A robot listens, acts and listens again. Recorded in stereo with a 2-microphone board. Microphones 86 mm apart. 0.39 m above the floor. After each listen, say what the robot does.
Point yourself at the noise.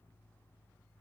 Keep listening.
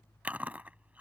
Turn 20° right.
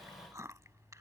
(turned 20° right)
Turn 145° right.
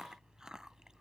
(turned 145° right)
Turn 10° right.
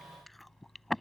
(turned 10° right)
Facing the chewing.